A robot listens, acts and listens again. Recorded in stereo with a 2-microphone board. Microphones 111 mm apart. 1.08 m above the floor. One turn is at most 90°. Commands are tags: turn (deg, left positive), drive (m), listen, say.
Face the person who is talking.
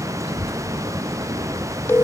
<turn deg="-60"/>
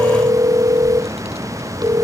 <listen/>
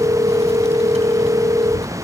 <turn deg="-65"/>
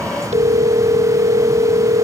<listen/>
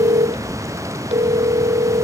<turn deg="-25"/>
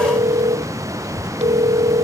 <turn deg="-10"/>
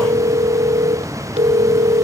<listen/>
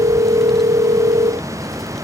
<listen/>
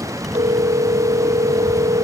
<say>Facing where the child speaking came from. I can't hear it now.</say>